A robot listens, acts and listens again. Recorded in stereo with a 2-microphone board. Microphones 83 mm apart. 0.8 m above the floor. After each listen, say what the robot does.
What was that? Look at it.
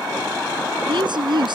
Turn 65° right.
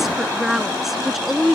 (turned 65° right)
Facing the woman speaking.